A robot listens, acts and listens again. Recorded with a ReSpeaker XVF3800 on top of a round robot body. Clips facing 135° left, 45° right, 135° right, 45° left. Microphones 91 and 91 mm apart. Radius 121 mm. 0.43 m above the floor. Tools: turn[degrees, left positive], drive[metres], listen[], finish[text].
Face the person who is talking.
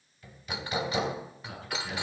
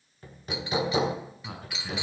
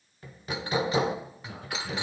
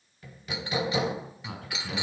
Action: finish[Facing the man speaking, over 4 m away.]